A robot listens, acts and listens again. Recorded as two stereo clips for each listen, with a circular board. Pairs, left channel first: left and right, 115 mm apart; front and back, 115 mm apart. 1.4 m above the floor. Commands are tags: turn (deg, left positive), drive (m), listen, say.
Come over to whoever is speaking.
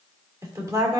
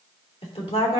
<turn deg="-30"/>
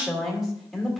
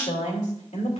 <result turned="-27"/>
<drive m="1.0"/>
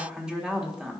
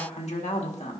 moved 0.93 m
<drive m="1.0"/>
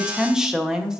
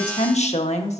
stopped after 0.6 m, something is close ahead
<say>Arrived at the woman speaking, straight ahead.</say>